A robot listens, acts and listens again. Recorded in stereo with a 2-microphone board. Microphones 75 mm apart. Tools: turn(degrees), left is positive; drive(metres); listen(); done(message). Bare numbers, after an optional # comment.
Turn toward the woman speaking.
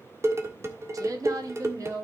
# The woman speaking: about 50° right or 130° right.
turn(-50)
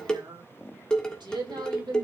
# So it is at 80° right.
turn(-80)
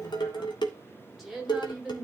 done("Facing the woman speaking.")